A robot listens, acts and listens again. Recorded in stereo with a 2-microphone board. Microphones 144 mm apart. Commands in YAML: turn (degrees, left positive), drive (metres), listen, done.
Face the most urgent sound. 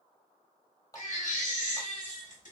turn: 65
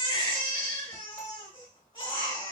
turn: 40
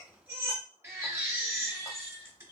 turn: -20
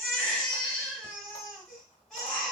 done: "Facing the baby crying, 1 to 2 m away."